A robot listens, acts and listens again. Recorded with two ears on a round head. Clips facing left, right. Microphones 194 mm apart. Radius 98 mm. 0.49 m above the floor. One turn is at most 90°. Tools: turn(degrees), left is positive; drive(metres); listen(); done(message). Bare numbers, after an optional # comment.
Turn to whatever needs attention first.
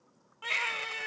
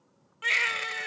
# The baby crying: about 25° right or 155° right.
turn(-25)
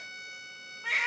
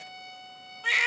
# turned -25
# So it is at 125° right.
turn(-90)
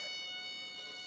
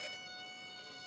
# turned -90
# Nothing new. It was at 35° right.
turn(-35)
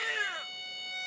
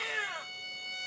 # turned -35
# The baby crying is now 25° left.
turn(25)
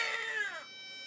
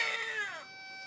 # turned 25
done("Found it: a baby crying, straight ahead.")